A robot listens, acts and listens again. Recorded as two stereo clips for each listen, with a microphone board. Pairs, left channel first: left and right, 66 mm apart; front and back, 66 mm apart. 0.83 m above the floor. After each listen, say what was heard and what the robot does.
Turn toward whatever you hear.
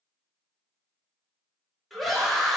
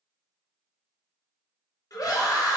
Facing the scream, under 1 m away.